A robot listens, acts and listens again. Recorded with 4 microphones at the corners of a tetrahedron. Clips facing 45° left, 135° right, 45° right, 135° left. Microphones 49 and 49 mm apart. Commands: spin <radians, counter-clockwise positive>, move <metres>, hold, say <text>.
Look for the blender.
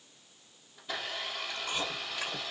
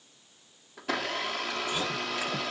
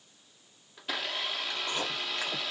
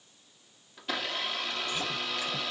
spin -2.36
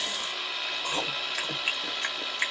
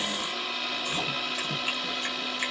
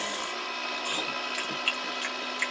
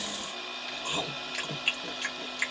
spin -0.79
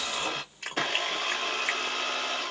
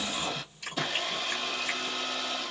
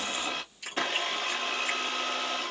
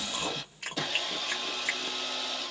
say Found it: a blender, straight ahead.